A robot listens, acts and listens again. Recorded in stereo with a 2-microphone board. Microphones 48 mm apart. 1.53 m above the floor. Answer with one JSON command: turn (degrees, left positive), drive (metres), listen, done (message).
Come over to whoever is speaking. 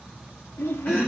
{"turn": 65}
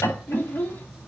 {"turn": 45}
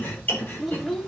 {"drive": 1.0}
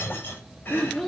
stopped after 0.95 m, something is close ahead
{"done": "Arrived at the child speaking, straight ahead."}